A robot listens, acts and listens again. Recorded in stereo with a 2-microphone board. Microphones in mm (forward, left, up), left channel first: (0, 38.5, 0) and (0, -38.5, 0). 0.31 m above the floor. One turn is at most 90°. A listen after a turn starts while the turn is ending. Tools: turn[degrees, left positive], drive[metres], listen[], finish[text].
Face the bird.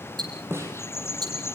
Thought: The bird: about 35° left or 145° left.
Action: turn[35]
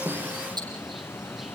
Action: listen[]
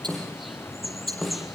Action: finish[Found it: a bird, straight ahead.]